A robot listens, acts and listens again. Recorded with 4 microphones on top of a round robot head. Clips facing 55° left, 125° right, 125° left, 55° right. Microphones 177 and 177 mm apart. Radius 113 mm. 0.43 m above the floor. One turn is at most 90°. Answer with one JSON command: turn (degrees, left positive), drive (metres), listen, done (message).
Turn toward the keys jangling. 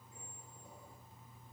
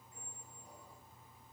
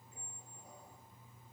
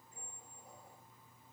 {"listen": true}
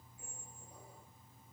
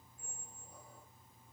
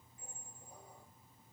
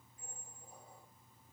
{"listen": true}
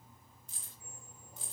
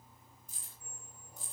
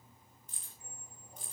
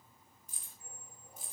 {"turn": 30}
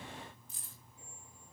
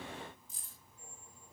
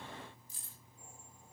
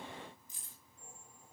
{"turn": 25}
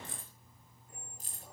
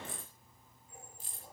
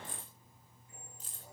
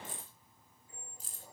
{"done": "Found it: keys jangling, straight ahead, over 4 m away."}